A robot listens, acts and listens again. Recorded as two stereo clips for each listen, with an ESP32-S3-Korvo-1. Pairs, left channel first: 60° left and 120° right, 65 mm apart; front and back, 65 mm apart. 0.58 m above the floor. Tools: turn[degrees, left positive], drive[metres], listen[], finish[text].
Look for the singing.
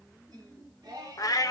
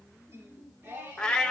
Thought: The singing: 120° right.
Action: turn[-120]
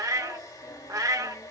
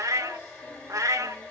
Action: listen[]
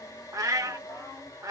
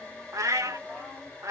Action: listen[]
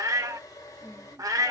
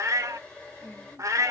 Thought: The singing is now 65° left.
Action: turn[65]
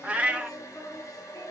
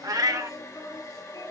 Thought: The singing is now 25° left.
Action: turn[25]
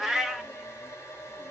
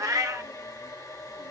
Action: listen[]
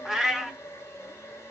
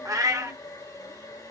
Action: listen[]
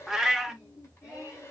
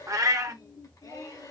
Thought: The singing is now 10° left.
Action: turn[10]
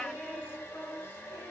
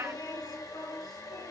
Action: finish[Found it: singing, straight ahead, 2 to 4 m away.]